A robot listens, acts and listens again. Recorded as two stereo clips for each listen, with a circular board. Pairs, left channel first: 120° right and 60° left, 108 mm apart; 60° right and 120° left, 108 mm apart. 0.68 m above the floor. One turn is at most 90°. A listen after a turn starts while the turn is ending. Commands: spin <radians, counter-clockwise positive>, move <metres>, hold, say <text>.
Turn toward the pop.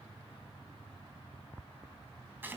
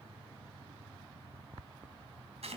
hold
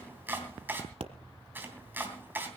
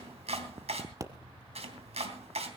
spin 1.13
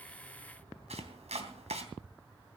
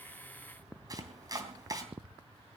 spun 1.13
say Facing where the pop came from. I can't hear it now.